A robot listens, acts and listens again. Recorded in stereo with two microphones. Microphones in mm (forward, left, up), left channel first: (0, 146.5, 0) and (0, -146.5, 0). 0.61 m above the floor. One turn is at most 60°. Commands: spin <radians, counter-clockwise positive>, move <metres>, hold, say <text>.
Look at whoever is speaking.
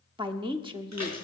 spin -0.26
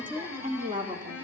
spin -1.05
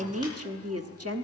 spin -1.05
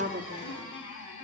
spin -0.87
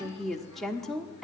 say Found it: a woman speaking, straight ahead.